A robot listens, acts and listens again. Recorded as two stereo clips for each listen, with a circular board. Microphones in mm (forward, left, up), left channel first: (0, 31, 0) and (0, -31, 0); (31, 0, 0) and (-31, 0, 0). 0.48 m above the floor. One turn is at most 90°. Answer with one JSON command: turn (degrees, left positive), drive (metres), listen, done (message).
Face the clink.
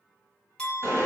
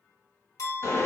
{"turn": 15}
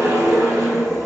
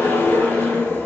{"listen": true}
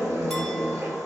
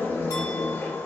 {"listen": true}
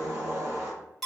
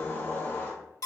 {"done": "Facing the clink."}